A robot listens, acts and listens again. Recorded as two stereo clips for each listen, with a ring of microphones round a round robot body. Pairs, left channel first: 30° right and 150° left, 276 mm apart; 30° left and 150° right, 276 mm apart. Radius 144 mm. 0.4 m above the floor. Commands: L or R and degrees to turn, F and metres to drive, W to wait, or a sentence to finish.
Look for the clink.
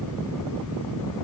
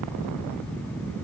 W
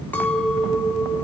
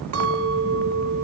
R115
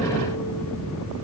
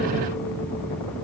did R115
W
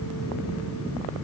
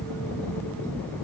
W
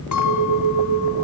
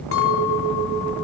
R10
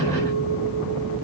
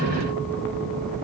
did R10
W
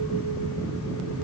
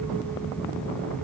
W
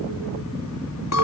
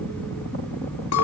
Found it: a clink, straight ahead, 2 to 4 m away.